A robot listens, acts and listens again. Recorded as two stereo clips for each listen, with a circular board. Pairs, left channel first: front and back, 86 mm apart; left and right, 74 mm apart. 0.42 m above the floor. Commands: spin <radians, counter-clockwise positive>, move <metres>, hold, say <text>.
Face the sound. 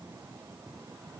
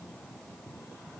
hold
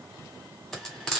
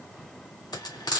spin 1.48
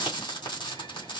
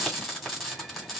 say Found it: frying, straight ahead.